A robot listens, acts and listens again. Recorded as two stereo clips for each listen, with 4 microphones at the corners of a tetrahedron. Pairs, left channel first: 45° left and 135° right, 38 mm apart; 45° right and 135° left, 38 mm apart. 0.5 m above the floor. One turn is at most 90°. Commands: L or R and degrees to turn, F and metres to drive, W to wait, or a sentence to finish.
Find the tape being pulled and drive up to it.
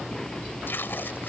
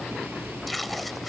L45
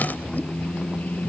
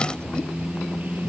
W
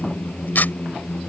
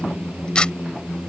L20
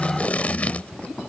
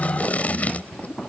F1.0
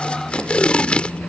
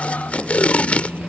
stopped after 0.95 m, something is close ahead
I am next to the tape being pulled.